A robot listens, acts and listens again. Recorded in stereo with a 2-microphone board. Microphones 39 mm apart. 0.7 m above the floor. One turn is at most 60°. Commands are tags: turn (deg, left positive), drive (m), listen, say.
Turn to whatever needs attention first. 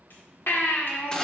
<turn deg="60"/>
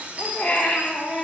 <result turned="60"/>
<turn deg="40"/>
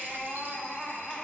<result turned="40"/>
<say>Facing the baby crying, 1 to 2 m away.</say>